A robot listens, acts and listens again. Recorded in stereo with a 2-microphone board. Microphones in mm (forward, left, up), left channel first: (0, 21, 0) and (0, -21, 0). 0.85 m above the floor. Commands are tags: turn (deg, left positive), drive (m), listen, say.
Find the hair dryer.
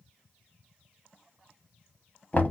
<listen/>
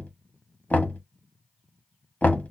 <listen/>
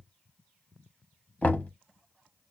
<say>I can't make out a hair dryer, only knocking.</say>